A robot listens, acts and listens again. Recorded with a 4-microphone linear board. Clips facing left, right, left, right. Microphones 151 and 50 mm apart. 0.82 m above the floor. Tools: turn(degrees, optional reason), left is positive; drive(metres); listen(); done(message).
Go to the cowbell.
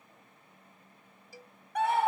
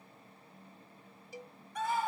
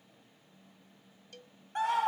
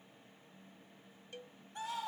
turn(degrees=-20, reason="The cowbell: about 20° right or 160° right.")
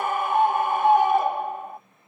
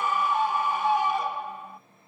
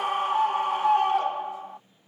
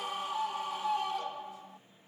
listen()
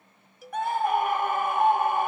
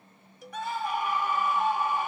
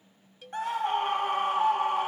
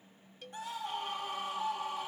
drive(metres=1.0)
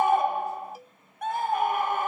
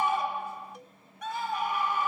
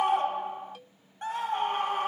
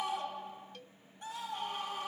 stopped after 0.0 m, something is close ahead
done("Blocked. The cowbell is further on, straight ahead.")